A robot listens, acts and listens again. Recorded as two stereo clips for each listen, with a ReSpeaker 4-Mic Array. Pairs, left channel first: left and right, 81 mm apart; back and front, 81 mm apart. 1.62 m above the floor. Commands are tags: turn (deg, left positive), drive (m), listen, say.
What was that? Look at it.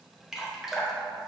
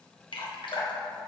<turn deg="-175"/>
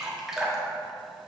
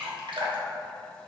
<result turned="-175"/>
<say>Facing the dripping.</say>